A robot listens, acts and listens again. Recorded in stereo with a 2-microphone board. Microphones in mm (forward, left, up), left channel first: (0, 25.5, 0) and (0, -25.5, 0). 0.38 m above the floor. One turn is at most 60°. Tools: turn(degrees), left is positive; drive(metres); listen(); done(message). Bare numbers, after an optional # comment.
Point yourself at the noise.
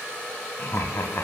# The laughter: about 55° left or 125° left.
turn(55)
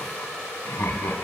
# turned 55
# So it is at 60° left.
turn(60)
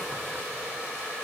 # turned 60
listen()
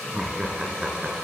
# The laughter is now 10° right.
turn(-10)
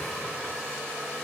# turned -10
listen()
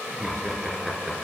done("Facing the laughter.")